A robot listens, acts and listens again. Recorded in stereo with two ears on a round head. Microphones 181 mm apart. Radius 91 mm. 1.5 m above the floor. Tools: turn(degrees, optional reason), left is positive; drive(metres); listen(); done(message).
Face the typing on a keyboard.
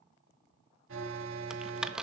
turn(degrees=-30)
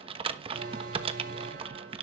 turn(degrees=-145, reason="So it is at 145° right.")
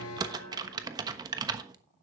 turn(degrees=-25, reason="The typing on a keyboard is now 25° right.")
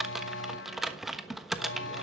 done("Found it: typing on a keyboard, straight ahead.")